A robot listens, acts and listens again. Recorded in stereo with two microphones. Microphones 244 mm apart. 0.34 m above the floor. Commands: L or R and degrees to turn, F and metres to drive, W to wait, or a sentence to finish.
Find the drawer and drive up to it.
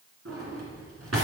R75
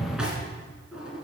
F1.0
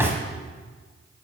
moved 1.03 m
R10
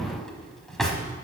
F1.0
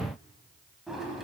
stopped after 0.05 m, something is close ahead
I am next to the drawer.